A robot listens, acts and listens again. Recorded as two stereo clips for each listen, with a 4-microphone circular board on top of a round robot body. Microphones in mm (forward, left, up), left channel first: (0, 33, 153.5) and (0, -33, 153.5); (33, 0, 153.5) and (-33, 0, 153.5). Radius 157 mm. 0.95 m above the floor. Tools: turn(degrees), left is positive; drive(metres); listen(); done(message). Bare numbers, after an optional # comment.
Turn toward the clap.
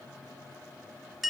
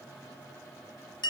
listen()
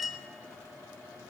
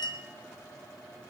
listen()
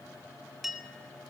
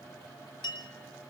done("I can't make out a clap to turn to.")